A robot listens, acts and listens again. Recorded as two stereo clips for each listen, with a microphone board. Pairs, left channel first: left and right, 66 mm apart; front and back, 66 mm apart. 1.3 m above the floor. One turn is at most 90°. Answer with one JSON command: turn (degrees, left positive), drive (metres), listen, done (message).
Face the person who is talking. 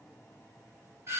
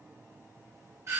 {"listen": true}
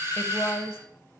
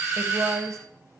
{"turn": 90}
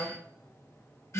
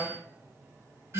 {"turn": 50}
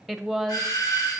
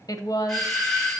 {"done": "Facing the woman speaking, under 1 m away."}